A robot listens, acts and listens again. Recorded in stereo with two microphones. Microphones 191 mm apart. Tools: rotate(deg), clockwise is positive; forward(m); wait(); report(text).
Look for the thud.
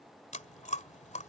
wait()
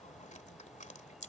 wait()
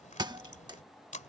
rotate(20)
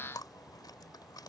wait()
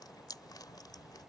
report("I heard a thud, but can't make it out now. It was about straight ahead or 140° right.")